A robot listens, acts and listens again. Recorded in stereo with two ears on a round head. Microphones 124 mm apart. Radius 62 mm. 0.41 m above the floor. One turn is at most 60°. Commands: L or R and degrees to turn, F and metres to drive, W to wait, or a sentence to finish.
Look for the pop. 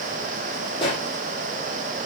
L35
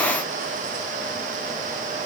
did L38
W
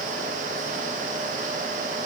I heard a pop, but can't make it out now. It was about straight ahead or 105° left.